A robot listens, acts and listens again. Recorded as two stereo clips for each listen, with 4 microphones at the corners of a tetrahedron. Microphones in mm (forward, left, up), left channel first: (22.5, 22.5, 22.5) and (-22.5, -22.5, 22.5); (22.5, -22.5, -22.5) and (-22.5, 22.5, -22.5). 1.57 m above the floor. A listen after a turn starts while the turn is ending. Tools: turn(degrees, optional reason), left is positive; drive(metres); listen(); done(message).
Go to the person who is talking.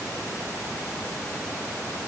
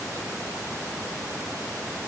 listen()
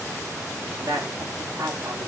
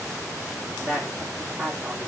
turn(degrees=-170, reason="The woman speaking: 170° right.")
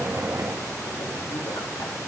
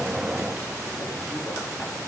listen()
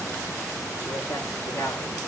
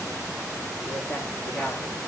drive(metres=1.0)
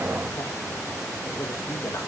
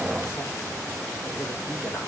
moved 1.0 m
listen()
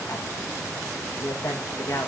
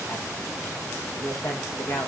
drive(metres=1.0)
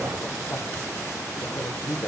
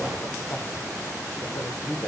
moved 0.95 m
drive(metres=1.0)
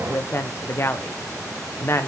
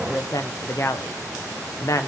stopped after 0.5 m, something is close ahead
turn(degrees=-10, reason="The woman speaking is now 10° right.")
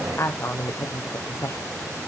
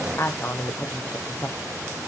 done("I am next to the woman speaking.")